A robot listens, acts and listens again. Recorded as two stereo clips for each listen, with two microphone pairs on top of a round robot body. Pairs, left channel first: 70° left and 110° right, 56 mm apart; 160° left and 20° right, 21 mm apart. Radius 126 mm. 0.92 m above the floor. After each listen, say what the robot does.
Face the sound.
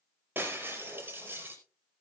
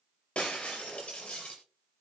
Turn 165° right.
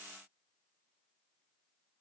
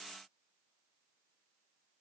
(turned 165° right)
I heard breaking glass from this way, but can't make it out now.